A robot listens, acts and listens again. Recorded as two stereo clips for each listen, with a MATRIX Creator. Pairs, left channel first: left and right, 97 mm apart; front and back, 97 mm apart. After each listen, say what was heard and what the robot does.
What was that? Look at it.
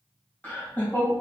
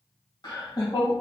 The laughter: 30° left. Turn 30° left.
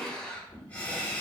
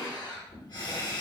The laughter is now 25° left. Turn 25° left.
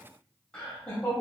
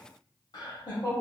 The laughter is now 20° left. Turn 20° left.
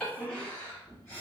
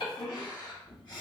The laughter is now 20° left. Turn 20° left.
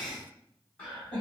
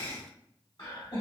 The laughter is now 10° left. Turn 10° left.
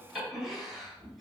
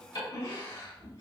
Facing the laughter.